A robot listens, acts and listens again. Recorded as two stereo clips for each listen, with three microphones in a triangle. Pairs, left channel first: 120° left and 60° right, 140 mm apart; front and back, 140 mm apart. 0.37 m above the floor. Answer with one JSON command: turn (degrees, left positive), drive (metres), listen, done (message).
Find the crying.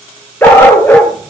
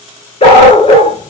{"listen": true}
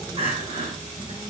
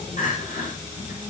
{"turn": -15}
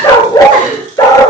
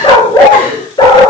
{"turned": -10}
{"done": "Found it: crying, straight ahead."}